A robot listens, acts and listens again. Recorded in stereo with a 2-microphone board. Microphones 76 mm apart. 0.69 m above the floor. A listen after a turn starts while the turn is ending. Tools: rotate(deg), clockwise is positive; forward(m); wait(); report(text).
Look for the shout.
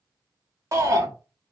rotate(45)
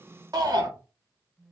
rotate(80)
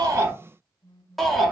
report("Found it: a shout, straight ahead, 1 to 2 m away.")